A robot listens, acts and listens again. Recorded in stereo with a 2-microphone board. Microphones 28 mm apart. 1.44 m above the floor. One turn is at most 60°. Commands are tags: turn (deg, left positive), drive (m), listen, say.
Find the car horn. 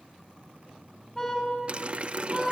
<turn deg="20"/>
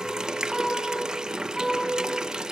<say>Facing the car horn.</say>